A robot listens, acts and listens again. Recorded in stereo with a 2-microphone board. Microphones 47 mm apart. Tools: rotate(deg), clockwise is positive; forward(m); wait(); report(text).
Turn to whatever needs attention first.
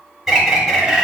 wait()
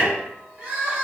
rotate(30)
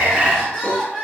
report("Facing the crying, 1 to 2 m away.")